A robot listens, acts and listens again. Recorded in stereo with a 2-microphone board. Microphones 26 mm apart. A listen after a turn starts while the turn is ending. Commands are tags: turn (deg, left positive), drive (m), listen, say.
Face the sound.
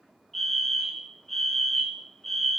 <turn deg="30"/>
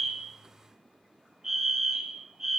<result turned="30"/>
<turn deg="-15"/>
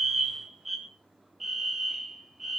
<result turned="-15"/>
<say>Found it: a fire alarm, straight ahead.</say>